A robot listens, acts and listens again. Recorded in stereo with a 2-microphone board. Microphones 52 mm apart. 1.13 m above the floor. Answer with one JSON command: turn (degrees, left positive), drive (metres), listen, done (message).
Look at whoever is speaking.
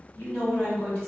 {"turn": 45}
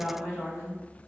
{"turn": 90}
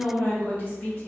{"turn": 25}
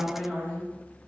{"done": "Found it: a woman speaking, straight ahead, 1 to 2 m away."}